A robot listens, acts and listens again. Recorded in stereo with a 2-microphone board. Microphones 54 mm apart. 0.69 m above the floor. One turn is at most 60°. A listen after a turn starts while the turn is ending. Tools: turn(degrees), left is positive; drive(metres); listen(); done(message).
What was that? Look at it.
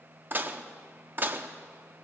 turn(degrees=-40)
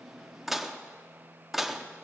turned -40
done("Found it: dishes clattering, straight ahead, under 1 m away.")